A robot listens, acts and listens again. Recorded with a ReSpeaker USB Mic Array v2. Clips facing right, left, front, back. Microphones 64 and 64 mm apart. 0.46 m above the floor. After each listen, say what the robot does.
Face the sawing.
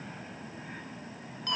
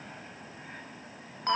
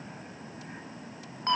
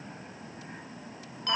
Keep listening.
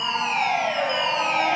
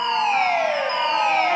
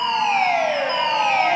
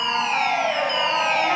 Keep listening.
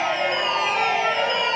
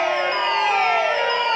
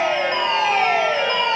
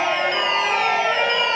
I can't make out sawing, only a fire alarm.